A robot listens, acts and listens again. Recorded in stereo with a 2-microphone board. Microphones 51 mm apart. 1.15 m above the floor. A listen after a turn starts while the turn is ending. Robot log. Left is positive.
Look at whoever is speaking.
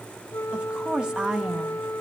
cmd yaw -30
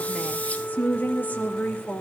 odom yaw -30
note: So it is at 40° left.
cmd yaw +40
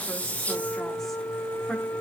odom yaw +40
cmd idle
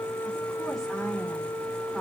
cmd idle
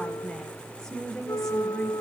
note: The woman speaking is now 10° left.
cmd yaw +10
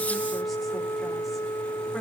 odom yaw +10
cmd idle
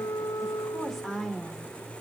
end: Found it: a woman speaking, straight ahead, over 4 m away.